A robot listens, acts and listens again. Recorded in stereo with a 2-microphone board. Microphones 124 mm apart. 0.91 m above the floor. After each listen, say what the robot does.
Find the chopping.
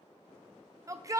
Keep listening.
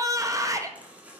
Turn 30° right.
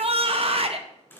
Turn 20° left.
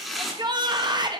Facing the chopping, 1 to 2 m away.